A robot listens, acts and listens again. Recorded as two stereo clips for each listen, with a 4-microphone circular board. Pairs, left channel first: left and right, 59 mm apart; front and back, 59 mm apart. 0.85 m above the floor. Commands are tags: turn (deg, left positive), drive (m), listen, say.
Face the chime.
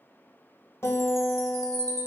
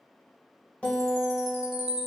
<turn deg="-100"/>
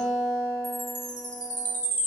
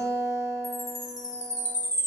<say>Facing the chime.</say>